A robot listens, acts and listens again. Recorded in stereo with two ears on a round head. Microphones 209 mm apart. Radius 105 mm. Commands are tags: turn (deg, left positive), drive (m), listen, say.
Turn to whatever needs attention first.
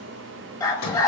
<turn deg="15"/>
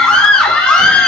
<say>Found it: a scream, straight ahead.</say>